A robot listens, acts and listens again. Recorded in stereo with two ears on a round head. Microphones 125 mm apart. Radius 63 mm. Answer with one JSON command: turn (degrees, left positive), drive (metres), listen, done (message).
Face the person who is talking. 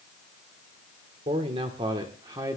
{"turn": -25}
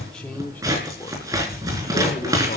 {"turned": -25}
{"turn": 25}
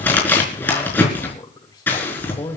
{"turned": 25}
{"turn": 25}
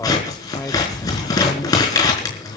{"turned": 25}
{"turn": 15}
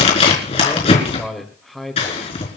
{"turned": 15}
{"done": "Found it: a man speaking, straight ahead."}